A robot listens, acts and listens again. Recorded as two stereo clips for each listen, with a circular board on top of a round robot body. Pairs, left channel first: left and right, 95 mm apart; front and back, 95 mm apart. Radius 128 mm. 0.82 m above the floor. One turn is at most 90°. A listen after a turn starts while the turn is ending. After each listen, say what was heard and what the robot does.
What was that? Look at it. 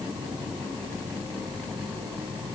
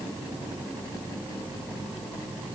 Keep listening.
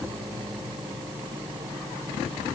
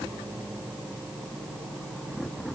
Keep listening.
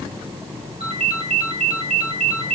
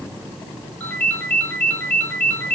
The ringtone: 75° right. Turn 75° right.
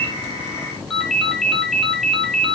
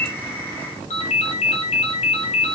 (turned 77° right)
Found it: a ringtone, straight ahead, 2 to 4 m away.